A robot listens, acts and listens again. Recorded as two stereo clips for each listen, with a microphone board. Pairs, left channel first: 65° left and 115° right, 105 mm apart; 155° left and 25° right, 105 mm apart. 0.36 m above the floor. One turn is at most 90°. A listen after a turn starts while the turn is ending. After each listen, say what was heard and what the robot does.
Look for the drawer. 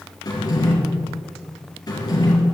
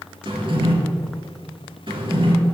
The drawer: 15° left. Turn 15° left.
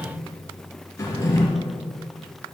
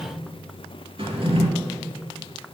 Found it: a drawer, straight ahead, 2 to 4 m away.